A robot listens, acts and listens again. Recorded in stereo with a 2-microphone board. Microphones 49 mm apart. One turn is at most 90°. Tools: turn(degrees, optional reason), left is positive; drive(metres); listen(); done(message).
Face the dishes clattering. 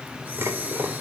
turn(degrees=-65, reason="The dishes clattering: about 65° right or 115° right.")
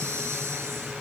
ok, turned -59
listen()
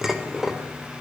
done("Facing the dishes clattering.")